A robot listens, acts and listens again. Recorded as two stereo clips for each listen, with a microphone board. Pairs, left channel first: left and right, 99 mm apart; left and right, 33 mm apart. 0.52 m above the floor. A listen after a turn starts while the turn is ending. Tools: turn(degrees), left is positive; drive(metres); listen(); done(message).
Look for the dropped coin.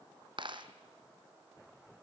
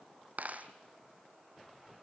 turn(degrees=-55)
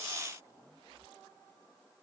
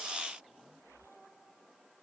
listen()
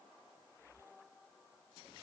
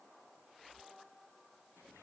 done("I heard a dropped coin, but can't make it out now. It was about straight ahead or 70° right.")